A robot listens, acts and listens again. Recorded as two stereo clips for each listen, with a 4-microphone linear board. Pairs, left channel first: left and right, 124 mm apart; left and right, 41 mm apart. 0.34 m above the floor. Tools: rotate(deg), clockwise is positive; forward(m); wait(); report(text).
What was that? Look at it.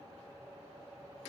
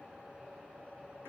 wait()
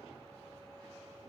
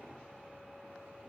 wait()
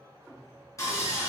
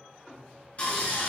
rotate(-30)
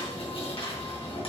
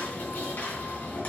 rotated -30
rotate(-120)
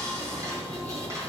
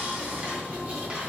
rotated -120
rotate(30)
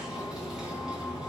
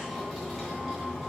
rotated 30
report("Facing the sawing, 2 to 4 m away.")